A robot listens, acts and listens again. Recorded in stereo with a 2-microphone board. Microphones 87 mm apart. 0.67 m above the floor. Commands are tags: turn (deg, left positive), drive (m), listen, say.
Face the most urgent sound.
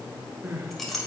<turn deg="-25"/>
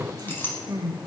<turn deg="-125"/>
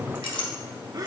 <turn deg="-55"/>
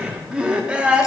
<turn deg="-15"/>
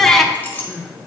<say>Facing the crying, under 1 m away.</say>